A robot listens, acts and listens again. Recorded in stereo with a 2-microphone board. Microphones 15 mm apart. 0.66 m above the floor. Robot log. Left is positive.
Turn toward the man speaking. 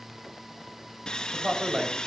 note: The man speaking: about 60° right or 120° right.
cmd yaw -60
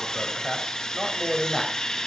note: So it is at 20° left.
cmd yaw +20
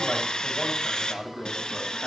note: The man speaking is now 20° left.
cmd yaw +20
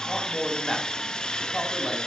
note: The man speaking is now 15° left.
cmd yaw +15
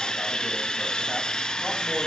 cmd idle
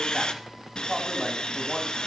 end: Facing the man speaking.